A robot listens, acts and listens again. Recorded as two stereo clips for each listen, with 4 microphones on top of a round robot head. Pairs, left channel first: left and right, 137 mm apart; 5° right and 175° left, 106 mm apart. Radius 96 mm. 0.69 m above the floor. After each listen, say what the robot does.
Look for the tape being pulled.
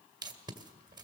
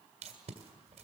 Turn 150° right.
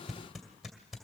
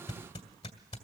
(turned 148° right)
Found it: tape being pulled, straight ahead.